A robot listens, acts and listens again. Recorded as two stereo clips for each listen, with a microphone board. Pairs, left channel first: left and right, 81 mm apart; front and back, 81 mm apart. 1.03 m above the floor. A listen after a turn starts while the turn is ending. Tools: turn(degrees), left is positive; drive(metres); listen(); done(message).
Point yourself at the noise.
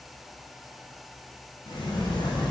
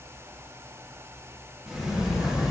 turn(degrees=100)
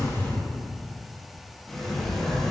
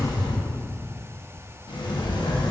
done("Facing the sliding door, 1 to 2 m away.")